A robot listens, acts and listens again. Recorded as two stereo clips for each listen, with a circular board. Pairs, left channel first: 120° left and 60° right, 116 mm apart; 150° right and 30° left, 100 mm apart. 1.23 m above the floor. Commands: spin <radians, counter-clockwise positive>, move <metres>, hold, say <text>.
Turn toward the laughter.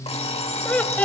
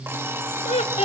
spin -2.88
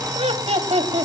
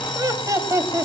spin -0.52
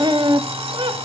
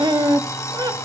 spin -0.26
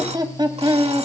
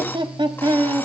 spin -0.17
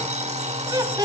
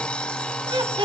say Facing the laughter.